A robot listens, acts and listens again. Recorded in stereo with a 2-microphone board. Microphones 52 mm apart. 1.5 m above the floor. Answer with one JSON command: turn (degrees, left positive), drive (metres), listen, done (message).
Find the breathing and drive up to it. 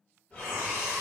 {"turn": 25}
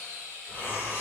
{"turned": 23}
{"turn": 125}
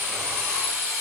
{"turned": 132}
{"listen": true}
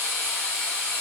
{"listen": true}
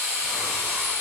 {"done": "I heard breathing from this way, but can't make it out now. I did not reach it."}